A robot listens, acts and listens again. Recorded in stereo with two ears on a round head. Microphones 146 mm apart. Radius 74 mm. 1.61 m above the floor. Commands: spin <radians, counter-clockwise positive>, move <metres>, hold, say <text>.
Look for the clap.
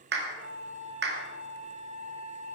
spin -1.22
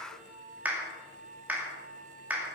spin -0.17
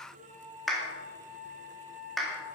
say Found it: a clap, straight ahead.